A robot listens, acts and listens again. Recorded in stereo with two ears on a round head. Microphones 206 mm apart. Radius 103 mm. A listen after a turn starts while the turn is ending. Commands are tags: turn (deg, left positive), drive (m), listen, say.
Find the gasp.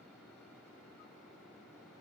<listen/>
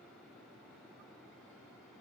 <listen/>
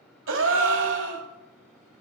<turn deg="-60"/>
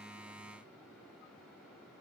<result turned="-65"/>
<listen/>
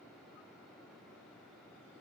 <say>I heard a gasp, but can't make it out now. It was about 5° left or 55° right.</say>